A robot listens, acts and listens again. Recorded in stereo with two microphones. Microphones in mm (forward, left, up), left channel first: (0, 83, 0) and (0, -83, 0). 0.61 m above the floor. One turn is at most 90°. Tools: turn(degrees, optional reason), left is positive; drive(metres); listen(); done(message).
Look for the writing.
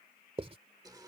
turn(degrees=-35, reason="The writing: about 35° right or 145° right.")
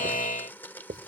turn(degrees=-90, reason="So it is at 105° right.")
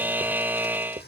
turn(degrees=-40, reason="The writing is now 40° right.")
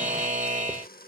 listen()
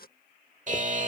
listen()
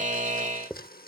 done("Found it: writing, straight ahead.")